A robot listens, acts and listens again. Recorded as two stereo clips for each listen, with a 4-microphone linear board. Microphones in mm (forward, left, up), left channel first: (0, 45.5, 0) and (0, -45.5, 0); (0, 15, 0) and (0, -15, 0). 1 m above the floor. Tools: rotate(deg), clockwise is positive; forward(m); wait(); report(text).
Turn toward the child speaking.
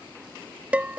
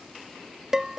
wait()
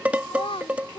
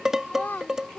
rotate(-90)
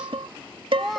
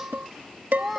report("Facing the child speaking.")